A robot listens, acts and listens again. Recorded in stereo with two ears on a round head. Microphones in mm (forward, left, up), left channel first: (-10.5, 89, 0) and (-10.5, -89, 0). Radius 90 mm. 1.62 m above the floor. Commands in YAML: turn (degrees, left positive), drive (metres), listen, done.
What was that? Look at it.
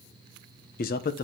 turn: 50
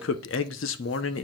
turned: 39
turn: 90
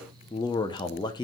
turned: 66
turn: 25
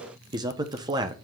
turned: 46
turn: -20
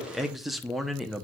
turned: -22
done: "Found it: a man speaking, straight ahead."